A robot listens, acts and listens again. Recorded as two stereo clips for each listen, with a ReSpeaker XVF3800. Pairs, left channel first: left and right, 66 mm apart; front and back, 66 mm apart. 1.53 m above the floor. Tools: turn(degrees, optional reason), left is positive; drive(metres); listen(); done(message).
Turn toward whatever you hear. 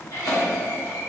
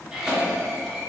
turn(degrees=100, reason="The cough: 100° left.")
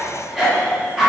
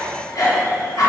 done("Found it: a cough, straight ahead.")